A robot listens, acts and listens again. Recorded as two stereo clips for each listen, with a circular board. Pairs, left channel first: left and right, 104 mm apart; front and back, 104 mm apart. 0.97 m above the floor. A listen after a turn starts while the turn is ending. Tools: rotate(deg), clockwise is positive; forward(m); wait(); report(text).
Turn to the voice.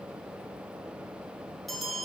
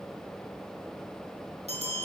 wait()
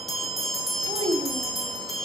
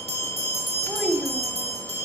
rotate(95)
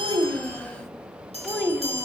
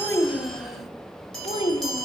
report("Found it: a child speaking, straight ahead, 1 to 2 m away.")